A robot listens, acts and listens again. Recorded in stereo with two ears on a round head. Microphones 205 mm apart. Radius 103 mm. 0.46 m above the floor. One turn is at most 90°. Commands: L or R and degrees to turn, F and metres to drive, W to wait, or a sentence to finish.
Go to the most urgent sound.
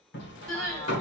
L30
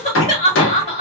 L90
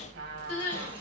L35
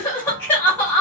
L10
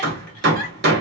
W
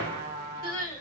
F1.0
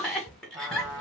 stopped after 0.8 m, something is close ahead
Arrived at the crying, straight ahead.